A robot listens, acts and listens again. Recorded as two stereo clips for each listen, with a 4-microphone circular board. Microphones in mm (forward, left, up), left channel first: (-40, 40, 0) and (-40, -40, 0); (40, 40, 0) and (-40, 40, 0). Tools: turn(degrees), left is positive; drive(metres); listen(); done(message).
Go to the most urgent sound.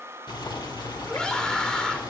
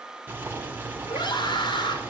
turn(degrees=10)
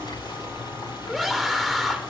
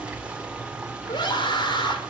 drive(metres=1.0)
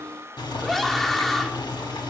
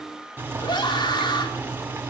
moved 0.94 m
drive(metres=1.0)
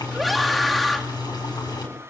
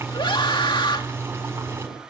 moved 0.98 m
drive(metres=1.0)
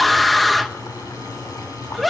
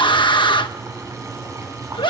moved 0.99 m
drive(metres=1.0)
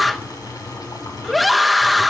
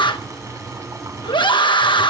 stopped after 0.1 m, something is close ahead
done("I am next to the scream.")